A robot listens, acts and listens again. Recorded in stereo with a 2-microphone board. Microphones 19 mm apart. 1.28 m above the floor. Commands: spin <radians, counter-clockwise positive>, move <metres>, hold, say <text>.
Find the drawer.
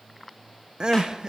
hold
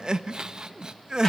hold
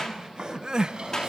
spin -1.05
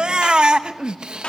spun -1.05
hold
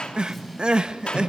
say Found it: a drawer, straight ahead, over 4 m away.